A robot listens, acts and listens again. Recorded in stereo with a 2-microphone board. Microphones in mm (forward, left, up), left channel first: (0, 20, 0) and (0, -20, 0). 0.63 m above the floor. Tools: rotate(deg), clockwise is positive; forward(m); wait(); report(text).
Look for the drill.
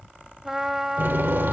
rotate(60)
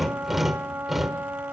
report("Found it: a drill, straight ahead, 1 to 2 m away.")